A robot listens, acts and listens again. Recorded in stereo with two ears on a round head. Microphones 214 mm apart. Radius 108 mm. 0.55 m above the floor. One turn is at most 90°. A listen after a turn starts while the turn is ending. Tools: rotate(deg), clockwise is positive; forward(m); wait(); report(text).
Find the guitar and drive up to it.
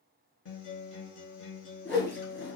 rotate(-55)
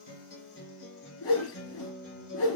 rotate(-60)
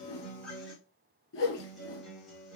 forward(1.0)
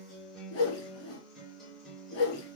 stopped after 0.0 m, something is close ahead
report("Something is in my way. I am facing the guitar but have not reached it.")